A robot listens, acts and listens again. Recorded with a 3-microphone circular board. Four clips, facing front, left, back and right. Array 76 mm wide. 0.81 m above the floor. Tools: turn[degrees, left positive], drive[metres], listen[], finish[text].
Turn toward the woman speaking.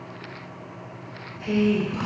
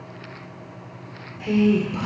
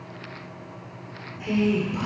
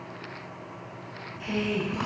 Thought: The woman speaking: 105° left.
Action: turn[105]
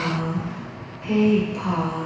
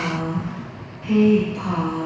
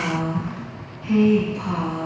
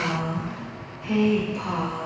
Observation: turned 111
Thought: The woman speaking is now 20° left.
Action: turn[20]
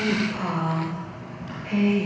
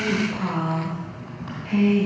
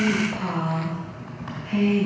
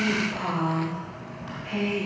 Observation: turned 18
Action: finish[Facing the woman speaking.]